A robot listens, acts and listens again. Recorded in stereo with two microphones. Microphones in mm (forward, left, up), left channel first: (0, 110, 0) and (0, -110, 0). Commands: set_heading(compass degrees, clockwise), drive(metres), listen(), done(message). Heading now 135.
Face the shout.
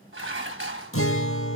listen()
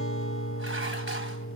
listen()
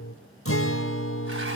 done("I can't make out a shout to turn to.")